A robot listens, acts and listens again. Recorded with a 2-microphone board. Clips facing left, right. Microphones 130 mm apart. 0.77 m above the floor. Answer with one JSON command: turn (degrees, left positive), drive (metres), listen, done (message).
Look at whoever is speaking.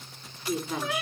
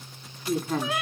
{"turn": -50}
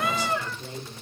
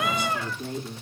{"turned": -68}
{"turn": -60}
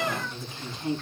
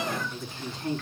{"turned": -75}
{"turn": 15}
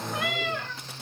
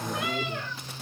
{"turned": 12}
{"listen": true}
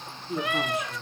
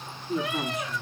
{"done": "Found it: a woman speaking, straight ahead."}